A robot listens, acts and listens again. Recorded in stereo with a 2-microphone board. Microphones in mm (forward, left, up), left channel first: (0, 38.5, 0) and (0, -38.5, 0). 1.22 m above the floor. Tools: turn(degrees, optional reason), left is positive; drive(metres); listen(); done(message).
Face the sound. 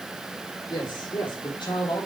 turn(degrees=90)
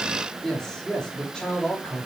turn(degrees=10, reason="So it is at 10° left.")
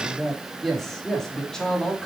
turn(degrees=10, reason="The man speaking is now 10° left.")
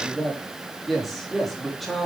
done("Found it: a man speaking, straight ahead.")